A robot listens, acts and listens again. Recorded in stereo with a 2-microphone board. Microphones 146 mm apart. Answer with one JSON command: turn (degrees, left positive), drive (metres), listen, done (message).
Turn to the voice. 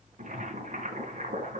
{"listen": true}
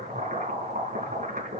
{"listen": true}
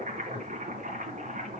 {"done": "I can't make out anyone speaking to turn to."}